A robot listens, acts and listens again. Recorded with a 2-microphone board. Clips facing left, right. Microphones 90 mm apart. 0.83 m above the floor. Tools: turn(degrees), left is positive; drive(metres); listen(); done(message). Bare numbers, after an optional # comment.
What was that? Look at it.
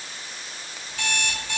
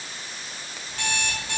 # The alarm clock: about 45° right or 135° right.
turn(-45)
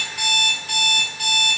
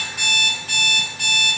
# So it is at 90° right.
turn(-90)
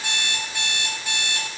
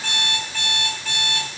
# The alarm clock is now 25° left.
turn(25)
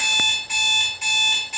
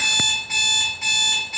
done("Facing the alarm clock, 1 to 2 m away.")